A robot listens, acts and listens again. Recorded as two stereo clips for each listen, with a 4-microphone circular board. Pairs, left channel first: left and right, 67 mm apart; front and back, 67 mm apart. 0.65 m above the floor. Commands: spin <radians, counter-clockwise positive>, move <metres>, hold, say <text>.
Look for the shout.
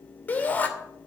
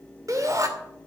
spin 2.71
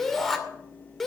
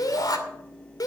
say Facing the shout.